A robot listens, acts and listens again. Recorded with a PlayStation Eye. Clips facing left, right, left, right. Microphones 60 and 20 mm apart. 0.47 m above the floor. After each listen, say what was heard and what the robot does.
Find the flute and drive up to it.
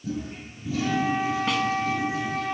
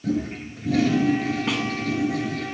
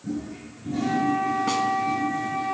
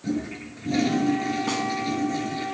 The flute: about 55° left or 125° left. Turn 55° left.
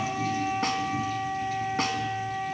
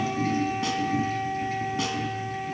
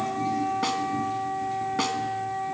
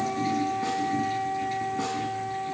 So it is at 10° left. Turn 10° left.
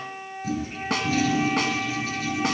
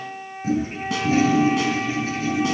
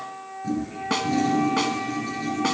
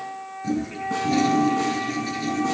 Drive 1.0 m forward.
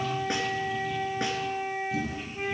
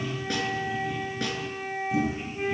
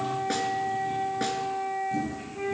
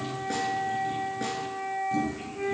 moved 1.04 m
The flute is now 10° left. Turn 10° left.
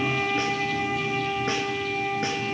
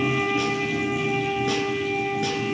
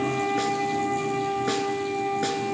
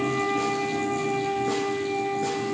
Drive 1.0 m forward.
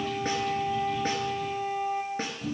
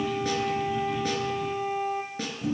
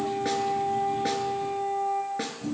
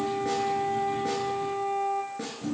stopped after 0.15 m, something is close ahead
Arrived at the flute, straight ahead.